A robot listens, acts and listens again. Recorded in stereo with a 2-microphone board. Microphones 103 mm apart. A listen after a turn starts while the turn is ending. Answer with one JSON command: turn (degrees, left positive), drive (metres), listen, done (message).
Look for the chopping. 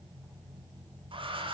{"listen": true}
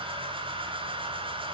{"listen": true}
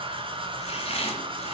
{"turn": 75}
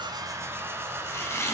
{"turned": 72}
{"turn": 25}
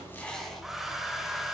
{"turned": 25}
{"done": "Found it: chopping, straight ahead."}